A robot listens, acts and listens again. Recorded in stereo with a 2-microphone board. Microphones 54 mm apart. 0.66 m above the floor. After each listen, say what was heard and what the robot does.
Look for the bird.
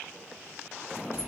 Keep listening.
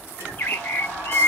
The bird: about 40° left or 140° left. Turn 40° left.
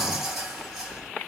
Keep listening.
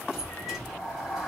Keep listening.
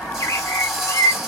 So it is at 105° left. Turn 105° left.
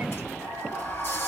Keep listening.
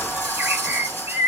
The bird is now 40° right. Turn 40° right.
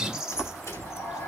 The bird is now 10° right. Turn 10° right.
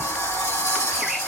Keep listening.
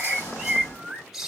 Found it: a bird, straight ahead.